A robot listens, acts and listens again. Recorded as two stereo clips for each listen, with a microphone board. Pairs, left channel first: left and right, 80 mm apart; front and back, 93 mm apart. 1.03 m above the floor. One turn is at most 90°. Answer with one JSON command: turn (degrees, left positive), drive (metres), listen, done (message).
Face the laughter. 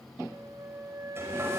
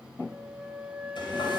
{"listen": true}
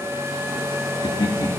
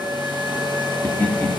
{"turn": 70}
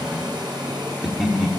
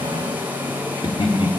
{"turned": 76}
{"done": "Facing the laughter, 2 to 4 m away."}